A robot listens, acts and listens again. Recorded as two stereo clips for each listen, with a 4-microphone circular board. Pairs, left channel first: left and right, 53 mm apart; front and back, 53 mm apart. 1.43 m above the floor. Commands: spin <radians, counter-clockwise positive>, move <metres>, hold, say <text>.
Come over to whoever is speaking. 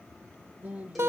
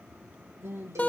spin -2.62
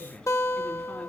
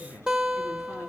spin 0.26
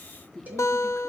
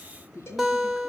move 1.0
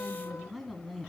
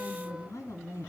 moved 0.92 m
move 1.0
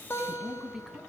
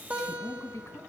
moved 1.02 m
spin -0.17
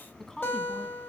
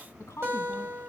move 1.0
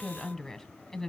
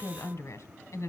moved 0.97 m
move 1.0
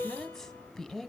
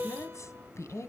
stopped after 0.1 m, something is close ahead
say Arrived at the woman speaking, straight ahead.